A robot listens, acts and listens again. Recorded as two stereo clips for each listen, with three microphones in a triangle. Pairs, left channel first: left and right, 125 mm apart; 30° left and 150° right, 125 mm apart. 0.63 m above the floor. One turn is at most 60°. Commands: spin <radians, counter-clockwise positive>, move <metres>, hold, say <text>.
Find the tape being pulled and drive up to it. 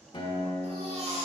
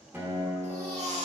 hold
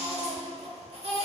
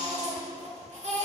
hold
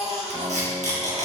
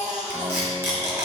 spin -1.05
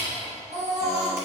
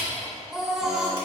spin -0.35
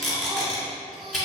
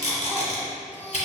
move 1.0
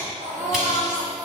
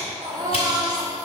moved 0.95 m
hold
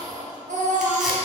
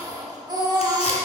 hold
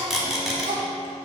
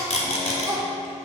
move 1.0
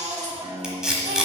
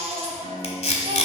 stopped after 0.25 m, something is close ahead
say Arrived at the tape being pulled, straight ahead.